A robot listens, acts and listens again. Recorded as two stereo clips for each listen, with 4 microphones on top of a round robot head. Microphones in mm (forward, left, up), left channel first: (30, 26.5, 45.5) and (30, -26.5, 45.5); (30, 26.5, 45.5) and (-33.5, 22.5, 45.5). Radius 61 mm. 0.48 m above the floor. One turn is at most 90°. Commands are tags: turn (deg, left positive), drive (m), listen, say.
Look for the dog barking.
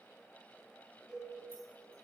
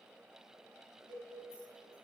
<listen/>
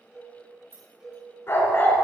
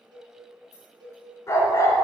<turn deg="40"/>
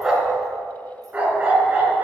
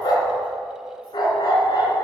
<turn deg="-30"/>
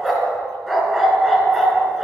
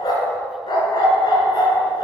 <say>Facing the dog barking.</say>